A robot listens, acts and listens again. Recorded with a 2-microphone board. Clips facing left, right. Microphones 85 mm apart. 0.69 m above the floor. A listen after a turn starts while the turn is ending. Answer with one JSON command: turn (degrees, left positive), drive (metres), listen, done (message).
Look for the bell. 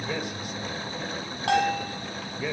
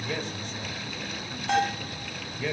{"turn": 90}
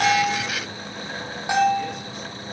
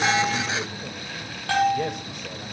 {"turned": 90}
{"turn": 15}
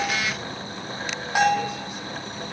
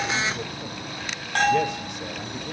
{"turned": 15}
{"turn": 10}
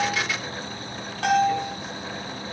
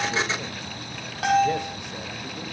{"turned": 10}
{"done": "Facing the bell, over 4 m away."}